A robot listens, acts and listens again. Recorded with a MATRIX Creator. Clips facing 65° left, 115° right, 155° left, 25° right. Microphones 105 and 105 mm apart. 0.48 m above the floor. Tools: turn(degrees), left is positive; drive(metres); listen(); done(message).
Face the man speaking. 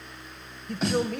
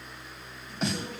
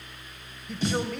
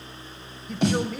turn(degrees=65)
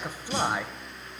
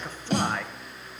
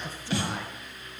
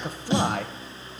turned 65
turn(degrees=-20)
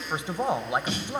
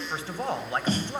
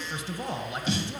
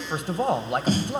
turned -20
turn(degrees=-10)
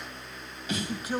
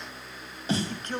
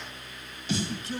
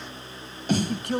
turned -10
turn(degrees=-15)
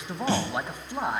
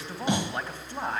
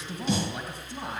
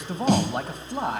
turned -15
done("Found it: a man speaking, straight ahead.")